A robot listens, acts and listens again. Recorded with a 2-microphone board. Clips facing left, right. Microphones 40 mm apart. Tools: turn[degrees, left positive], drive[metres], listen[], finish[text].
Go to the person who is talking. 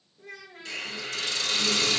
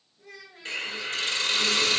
Thought: The child speaking: about 40° left or 140° left.
Action: turn[40]
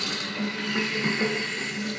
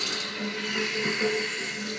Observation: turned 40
Action: listen[]
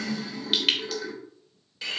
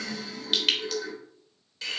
Action: listen[]
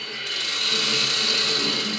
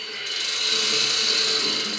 Action: finish[I heard a child speaking, but can't make it out now. It was about straight ahead or 100° left. I did not reach it.]